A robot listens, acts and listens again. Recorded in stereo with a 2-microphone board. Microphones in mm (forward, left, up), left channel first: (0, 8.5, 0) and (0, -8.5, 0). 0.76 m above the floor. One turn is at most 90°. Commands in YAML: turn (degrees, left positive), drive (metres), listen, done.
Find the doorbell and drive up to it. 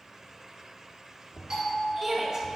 turn: -50
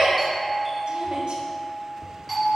drive: 1.0
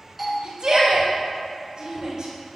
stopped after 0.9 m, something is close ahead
turn: -10
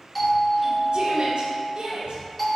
done: "I am next to the doorbell."